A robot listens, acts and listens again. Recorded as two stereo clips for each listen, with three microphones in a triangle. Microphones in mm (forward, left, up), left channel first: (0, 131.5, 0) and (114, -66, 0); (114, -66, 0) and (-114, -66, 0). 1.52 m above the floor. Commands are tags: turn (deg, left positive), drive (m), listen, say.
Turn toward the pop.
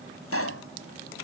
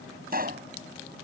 <turn deg="130"/>
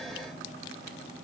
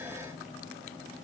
<say>Facing where the pop came from. I can't hear it now.</say>